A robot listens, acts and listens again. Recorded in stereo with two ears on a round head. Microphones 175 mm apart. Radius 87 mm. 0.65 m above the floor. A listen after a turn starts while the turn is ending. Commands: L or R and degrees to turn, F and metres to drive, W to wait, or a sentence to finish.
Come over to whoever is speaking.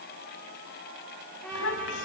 L75
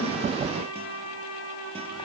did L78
W
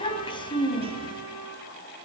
L25
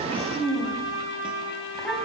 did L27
F1.0
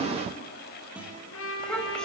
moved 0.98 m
F1.0
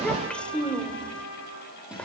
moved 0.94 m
F1.0
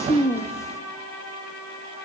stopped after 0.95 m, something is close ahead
L15
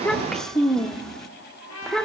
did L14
I am next to the child speaking.